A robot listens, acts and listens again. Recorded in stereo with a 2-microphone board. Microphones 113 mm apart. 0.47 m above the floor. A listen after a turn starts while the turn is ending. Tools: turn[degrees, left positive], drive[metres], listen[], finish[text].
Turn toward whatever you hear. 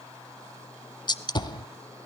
Thought: The gunshot: about 40° left or 140° left.
Action: turn[40]
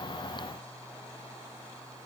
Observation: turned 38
Action: listen[]
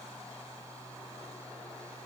Action: finish[I heard a gunshot, but can't make it out now. It was about 5° left or 100° left.]